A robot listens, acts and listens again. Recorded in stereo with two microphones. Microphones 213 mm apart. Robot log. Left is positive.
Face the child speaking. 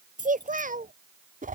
note: The child speaking: about 40° right or 140° right.
cmd yaw -40
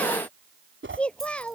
end: Found it: a child speaking, straight ahead.